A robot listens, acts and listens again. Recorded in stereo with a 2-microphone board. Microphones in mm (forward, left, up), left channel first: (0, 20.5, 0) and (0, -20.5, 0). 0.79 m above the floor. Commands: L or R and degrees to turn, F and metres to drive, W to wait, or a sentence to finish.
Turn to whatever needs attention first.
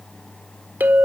W
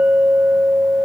W
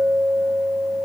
I can't make out anything urgent to turn to.